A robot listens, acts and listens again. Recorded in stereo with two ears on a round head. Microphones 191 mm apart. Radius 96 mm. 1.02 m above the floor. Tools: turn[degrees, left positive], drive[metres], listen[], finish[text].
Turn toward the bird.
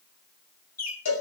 Thought: The bird: about 40° left or 140° left.
Action: turn[40]
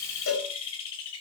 Thought: So it is at 105° left.
Action: turn[105]
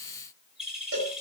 Action: finish[Found it: a bird, straight ahead, over 4 m away.]